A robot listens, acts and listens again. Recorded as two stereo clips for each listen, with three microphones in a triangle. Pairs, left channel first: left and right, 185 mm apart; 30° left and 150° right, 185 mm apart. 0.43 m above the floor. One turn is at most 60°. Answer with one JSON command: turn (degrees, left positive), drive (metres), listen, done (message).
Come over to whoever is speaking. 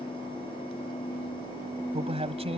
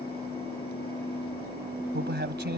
{"turn": -60}
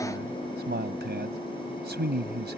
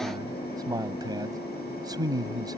{"turn": -60}
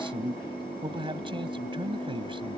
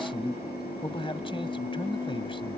{"turn": -30}
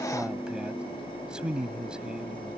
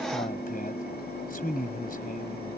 {"drive": 1.0}
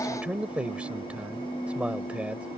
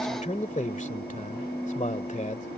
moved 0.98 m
{"turn": -10}
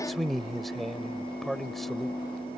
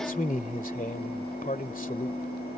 {"drive": 1.0}
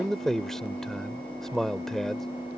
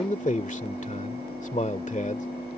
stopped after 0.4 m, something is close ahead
{"done": "I am next to the man speaking."}